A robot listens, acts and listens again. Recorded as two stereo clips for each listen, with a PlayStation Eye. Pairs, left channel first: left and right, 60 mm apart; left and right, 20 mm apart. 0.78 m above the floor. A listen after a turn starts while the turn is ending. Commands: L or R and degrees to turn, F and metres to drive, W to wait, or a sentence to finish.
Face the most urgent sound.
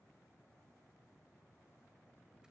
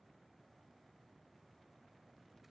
W
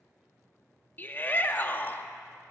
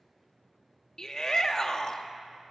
L30
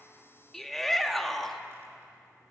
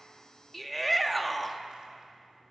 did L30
Found it: a shout, straight ahead, under 1 m away.